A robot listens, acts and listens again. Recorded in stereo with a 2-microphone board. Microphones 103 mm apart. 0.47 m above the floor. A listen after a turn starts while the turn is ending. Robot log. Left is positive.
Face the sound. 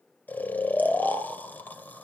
note: The snoring: about 20° left or 160° left.
cmd yaw +20
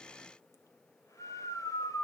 note: So it is at 140° left.
cmd yaw +140
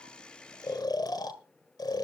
note: The snoring is now 50° left.
cmd yaw +50
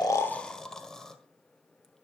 end: Found it: snoring, straight ahead, 1 to 2 m away.